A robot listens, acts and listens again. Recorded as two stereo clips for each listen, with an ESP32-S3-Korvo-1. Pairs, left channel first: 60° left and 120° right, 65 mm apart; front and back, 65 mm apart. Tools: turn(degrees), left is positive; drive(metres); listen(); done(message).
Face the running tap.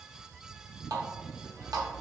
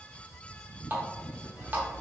turn(degrees=-125)
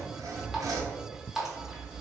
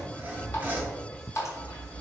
turn(degrees=-35)
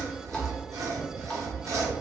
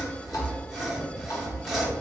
listen()
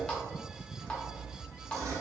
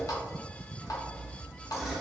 turn(degrees=-15)
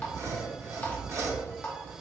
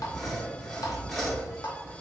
done("Found it: a running tap, straight ahead, under 1 m away.")